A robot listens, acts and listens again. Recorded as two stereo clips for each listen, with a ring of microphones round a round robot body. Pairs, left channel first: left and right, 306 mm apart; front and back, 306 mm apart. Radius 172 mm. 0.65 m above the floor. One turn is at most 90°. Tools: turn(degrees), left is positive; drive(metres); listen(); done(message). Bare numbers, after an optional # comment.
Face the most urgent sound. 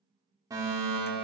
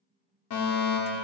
# The fire alarm: 10° right.
turn(-10)
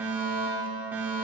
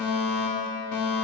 done("Facing the fire alarm, 2 to 4 m away.")